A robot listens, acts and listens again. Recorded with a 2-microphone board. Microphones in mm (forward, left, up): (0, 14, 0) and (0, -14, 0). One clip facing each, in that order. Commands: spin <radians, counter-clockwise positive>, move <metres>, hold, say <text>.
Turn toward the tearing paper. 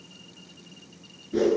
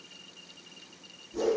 hold
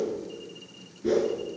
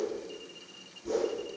hold
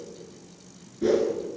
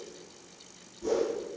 say I can't make out tearing paper to turn to.